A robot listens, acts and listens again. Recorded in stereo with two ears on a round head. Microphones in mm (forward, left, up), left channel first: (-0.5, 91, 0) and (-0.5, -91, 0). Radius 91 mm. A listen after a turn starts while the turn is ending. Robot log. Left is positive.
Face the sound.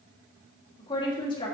note: The woman speaking: about 25° left or 155° left.
cmd yaw +25
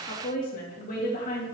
note: So it is at 135° left.
cmd yaw +135
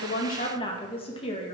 note: The woman speaking is now 30° left.
cmd yaw +30
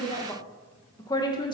note: The woman speaking is now 20° left.
cmd yaw +20
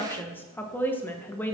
note: The woman speaking is now 10° left.
cmd yaw +10
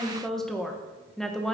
end: Facing the woman speaking, 1 to 2 m away.